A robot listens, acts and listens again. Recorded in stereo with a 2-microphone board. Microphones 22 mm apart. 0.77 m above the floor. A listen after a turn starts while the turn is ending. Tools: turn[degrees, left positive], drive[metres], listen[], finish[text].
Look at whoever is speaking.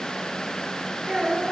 Thought: The child speaking: about 30° right or 150° right.
Action: turn[-30]
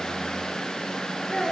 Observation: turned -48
Thought: So it is at 15° left.
Action: turn[15]
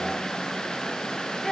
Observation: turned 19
Action: finish[Facing the child speaking.]